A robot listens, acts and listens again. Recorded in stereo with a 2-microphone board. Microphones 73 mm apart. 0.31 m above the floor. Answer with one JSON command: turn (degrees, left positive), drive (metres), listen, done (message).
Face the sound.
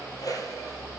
{"turn": 55}
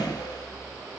{"listen": true}
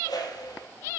{"turn": 70}
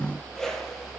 {"done": "Facing the whoosh."}